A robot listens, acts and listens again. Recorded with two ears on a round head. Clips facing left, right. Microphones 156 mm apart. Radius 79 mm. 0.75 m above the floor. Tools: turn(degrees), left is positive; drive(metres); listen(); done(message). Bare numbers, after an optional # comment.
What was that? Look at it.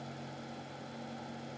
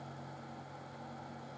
listen()
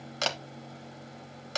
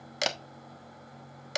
# The camera shutter: about 15° right or 165° right.
turn(-15)
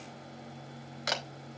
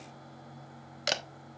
# So it is at 150° right.
turn(-150)
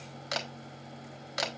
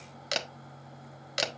# The camera shutter is now 35° right.
turn(-35)
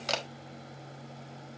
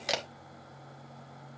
# The camera shutter is now 10° right.
turn(-10)
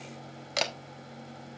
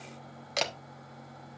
done("Facing the camera shutter.")